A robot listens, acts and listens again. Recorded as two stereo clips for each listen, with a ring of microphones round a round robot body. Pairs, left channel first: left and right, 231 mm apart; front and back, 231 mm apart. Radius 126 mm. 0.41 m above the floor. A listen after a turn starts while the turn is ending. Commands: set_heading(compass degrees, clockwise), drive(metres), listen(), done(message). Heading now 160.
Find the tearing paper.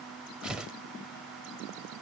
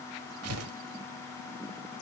set_heading(335)
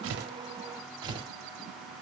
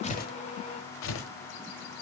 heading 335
set_heading(355)
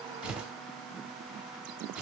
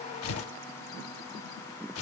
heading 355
done("Facing the tearing paper, 1 to 2 m away.")